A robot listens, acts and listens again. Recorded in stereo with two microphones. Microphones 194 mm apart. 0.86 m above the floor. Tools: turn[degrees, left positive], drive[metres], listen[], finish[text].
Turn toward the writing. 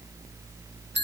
Action: listen[]
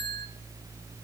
Action: listen[]
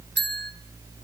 Action: finish[I can't make out writing, only a bell.]